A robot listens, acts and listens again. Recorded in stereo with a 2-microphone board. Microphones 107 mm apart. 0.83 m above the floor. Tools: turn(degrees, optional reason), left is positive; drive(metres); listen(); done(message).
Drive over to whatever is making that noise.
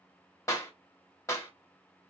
turn(degrees=30, reason="The clap: about 30° left or 150° left.")
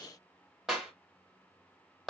drive(metres=1.0)
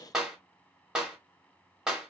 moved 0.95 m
drive(metres=1.0)
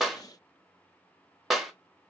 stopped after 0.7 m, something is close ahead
done("I am next to the clap.")